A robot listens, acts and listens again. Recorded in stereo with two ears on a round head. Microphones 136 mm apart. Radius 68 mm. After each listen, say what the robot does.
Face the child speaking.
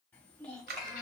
Turn 30° left.
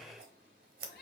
Keep listening.
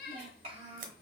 Turn 45° right.
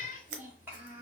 Turn 15° right.
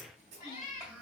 Turn 10° right.
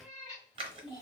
Facing the child speaking.